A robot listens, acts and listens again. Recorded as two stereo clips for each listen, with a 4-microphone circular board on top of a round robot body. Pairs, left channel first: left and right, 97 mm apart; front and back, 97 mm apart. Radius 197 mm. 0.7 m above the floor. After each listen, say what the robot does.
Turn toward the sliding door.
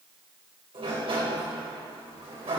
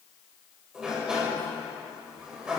Turn 100° right.
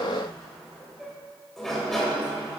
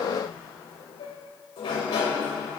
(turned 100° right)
Found it: a sliding door, straight ahead.